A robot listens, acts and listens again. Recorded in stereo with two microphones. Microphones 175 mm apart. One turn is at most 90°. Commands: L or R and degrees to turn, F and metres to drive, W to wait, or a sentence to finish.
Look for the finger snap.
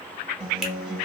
W
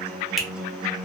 L30
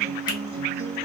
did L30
W
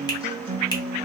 W
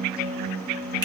I heard a finger snap, but can't make it out now. It was about 30° right or 150° left.